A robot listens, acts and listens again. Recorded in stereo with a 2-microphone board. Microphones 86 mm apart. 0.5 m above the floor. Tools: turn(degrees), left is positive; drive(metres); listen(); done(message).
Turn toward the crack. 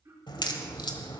turn(degrees=60)
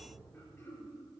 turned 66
listen()
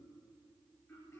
done("I heard a crack, but can't make it out now. It was about 5° right or 55° left.")